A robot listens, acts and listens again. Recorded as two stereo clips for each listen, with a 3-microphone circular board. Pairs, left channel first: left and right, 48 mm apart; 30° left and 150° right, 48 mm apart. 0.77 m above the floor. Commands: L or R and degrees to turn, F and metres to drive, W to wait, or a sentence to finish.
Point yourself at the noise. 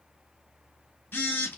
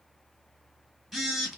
L120
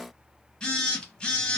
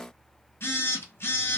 L25
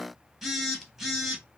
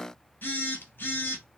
Found it: a phone buzzing, straight ahead.